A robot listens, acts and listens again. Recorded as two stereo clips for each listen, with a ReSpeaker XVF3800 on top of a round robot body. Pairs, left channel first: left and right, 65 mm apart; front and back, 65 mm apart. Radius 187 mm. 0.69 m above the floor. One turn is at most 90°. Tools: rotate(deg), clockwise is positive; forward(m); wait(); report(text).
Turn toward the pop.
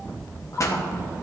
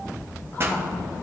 rotate(-90)
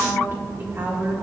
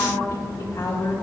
rotate(-40)
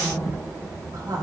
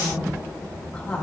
report("Facing where the pop came from. I can't hear it now.")